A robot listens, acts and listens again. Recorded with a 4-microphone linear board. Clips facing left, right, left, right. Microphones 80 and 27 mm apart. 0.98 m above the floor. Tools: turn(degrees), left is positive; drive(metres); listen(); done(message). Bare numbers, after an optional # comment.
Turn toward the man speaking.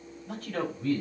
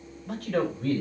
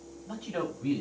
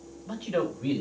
turn(-90)
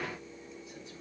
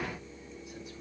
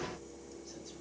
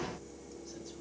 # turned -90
listen()
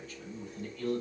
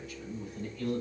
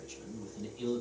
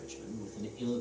# The man speaking is now 10° right.
turn(-10)
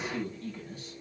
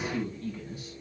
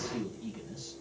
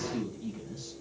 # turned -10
# The man speaking is now 10° right.
turn(-10)
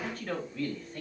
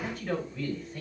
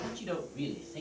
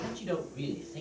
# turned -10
done("Found it: a man speaking, straight ahead.")